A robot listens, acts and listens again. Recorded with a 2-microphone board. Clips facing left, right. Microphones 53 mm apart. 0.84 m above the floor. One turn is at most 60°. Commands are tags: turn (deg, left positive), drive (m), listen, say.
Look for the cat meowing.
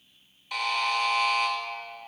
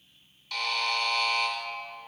<listen/>
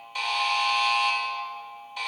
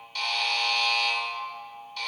<listen/>
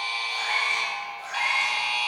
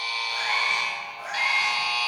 <turn deg="-40"/>
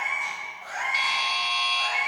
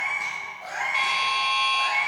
<turn deg="-60"/>
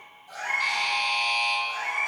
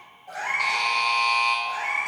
<turn deg="-45"/>
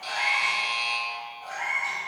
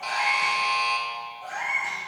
<turn deg="-10"/>
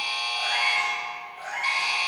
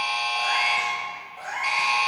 <say>Facing the cat meowing.</say>